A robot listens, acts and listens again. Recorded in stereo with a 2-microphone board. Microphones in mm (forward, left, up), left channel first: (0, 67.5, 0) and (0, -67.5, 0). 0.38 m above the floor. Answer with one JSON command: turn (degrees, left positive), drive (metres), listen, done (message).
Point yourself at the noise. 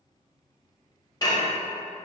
{"turn": 30}
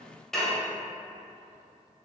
{"done": "Found it: dishes clattering, straight ahead."}